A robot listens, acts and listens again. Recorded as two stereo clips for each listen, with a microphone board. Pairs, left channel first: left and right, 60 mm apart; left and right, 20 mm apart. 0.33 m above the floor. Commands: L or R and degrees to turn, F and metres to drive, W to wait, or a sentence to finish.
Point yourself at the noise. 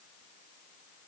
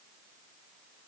W
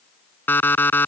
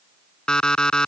L35
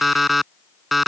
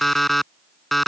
Facing the alarm clock.